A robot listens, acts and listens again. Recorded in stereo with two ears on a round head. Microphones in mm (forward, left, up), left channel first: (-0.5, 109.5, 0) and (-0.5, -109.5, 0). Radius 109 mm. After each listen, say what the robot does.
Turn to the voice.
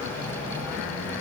Keep listening.
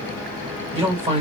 Turn 25° right.
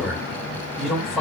Found it: a man speaking, straight ahead, 1 to 2 m away.